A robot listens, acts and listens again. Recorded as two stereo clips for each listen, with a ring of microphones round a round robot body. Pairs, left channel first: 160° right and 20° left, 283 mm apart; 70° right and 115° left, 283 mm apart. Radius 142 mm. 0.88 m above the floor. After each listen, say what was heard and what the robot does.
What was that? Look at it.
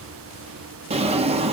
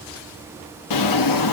The drawer: 45° right. Turn 45° right.
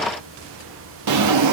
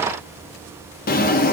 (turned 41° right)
Found it: a drawer, straight ahead.